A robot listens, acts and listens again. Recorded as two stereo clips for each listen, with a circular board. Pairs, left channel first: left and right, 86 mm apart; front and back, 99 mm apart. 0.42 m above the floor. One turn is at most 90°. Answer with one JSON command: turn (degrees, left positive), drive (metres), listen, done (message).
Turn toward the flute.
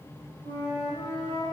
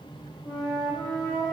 {"turn": 80}
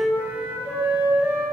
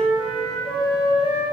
{"turn": -20}
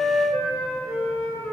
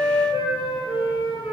{"done": "Facing the flute."}